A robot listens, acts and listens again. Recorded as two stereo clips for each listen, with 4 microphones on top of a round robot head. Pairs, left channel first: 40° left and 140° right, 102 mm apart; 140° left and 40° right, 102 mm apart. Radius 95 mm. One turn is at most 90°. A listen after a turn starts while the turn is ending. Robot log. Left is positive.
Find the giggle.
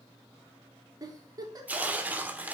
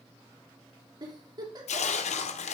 note: The giggle: 85° right.
cmd yaw -85
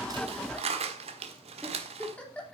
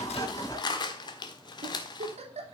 note: The giggle is now 40° right.
cmd yaw -40
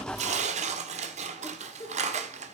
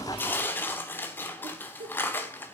note: The giggle is now 15° right.
cmd yaw -15
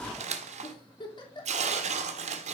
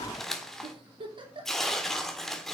end: Facing the giggle.